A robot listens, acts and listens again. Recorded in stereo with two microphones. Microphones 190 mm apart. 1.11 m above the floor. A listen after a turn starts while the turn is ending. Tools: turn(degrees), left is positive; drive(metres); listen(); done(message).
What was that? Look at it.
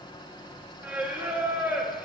turn(degrees=-30)
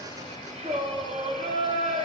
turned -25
turn(degrees=-145)
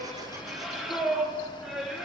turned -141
done("Found it: singing, straight ahead, under 1 m away.")